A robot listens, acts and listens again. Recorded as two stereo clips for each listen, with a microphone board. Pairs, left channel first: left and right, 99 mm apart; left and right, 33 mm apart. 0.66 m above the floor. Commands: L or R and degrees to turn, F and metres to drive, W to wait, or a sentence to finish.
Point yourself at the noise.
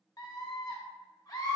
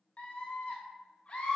L40
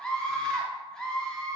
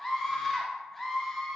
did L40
L10
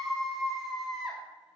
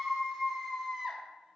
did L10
Found it: a scream, straight ahead, 1 to 2 m away.